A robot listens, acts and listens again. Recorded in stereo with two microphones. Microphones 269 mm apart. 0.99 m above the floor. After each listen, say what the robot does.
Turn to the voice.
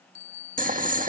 Keep listening.
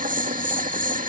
Keep listening.
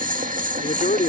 Turn 30° left.
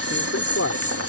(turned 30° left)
Turn 115° left.
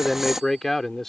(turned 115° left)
Found it: a man speaking, straight ahead.